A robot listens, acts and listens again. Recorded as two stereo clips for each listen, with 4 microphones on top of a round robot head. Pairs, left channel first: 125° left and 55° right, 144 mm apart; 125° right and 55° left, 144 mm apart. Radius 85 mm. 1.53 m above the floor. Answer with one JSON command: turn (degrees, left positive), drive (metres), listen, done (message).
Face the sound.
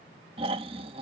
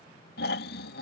{"turn": -110}
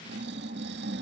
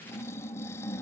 {"turn": -55}
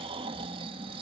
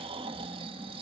{"done": "Facing the snoring."}